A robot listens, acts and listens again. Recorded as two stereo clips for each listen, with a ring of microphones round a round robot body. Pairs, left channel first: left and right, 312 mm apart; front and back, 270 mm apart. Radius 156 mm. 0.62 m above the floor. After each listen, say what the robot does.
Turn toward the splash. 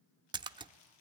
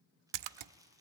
Turn 165° right.
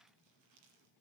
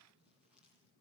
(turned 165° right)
I heard a splash from this way, but can't make it out now.